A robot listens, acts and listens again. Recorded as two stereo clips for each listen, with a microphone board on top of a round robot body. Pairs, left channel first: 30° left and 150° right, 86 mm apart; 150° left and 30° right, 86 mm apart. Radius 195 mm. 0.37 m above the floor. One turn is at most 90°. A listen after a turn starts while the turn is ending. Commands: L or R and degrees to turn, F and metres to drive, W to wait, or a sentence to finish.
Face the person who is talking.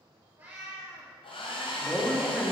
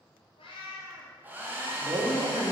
R65
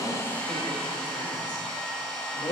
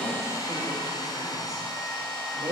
Found it: a woman speaking, straight ahead, 2 to 4 m away.